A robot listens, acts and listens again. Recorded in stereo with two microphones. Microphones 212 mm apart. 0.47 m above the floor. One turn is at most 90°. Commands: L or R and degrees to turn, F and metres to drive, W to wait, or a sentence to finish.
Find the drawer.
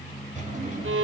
R35
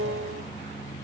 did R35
W
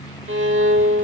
W
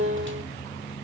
I heard a drawer, but can't make it out now. It was about straight ahead or 110° right.